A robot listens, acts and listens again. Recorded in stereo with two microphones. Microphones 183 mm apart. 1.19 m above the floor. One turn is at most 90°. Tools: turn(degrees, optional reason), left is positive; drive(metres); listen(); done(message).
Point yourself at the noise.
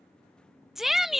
turn(degrees=30)
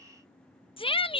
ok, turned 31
turn(degrees=90, reason="So it is at 150° left.")
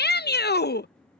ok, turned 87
turn(degrees=65, reason="The shout is now 65° left.")
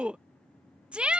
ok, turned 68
done("Facing the shout.")